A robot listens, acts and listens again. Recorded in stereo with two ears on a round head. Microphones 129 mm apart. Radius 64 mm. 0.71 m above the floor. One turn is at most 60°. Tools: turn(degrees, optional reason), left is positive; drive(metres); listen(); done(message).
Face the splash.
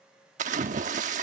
turn(degrees=-55, reason="The splash: about 55° right or 125° right.")
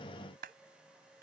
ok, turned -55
listen()
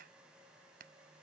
done("I heard a splash, but can't make it out now. It was about straight ahead or 70° right.")